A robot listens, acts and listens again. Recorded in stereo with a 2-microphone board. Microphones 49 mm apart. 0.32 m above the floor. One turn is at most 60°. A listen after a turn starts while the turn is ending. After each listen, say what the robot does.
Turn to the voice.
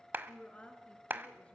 Turn 30° left.
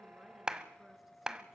Keep listening.
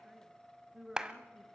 Facing the woman speaking, 2 to 4 m away.